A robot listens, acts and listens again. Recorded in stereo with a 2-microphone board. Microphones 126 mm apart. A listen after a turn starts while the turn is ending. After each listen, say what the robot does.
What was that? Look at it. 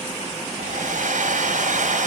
Turn 90° right.
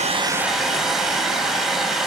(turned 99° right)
Found it: a hair dryer, straight ahead.